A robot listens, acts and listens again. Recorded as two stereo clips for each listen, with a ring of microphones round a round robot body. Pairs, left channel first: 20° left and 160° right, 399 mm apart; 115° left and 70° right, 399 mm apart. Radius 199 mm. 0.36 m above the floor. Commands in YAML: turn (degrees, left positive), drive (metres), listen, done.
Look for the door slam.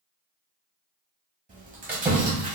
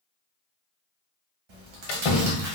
turn: 120
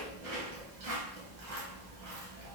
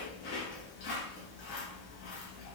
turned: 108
turn: 10
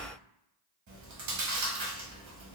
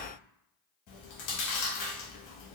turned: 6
done: "I heard a door slam from this way, but can't make it out now."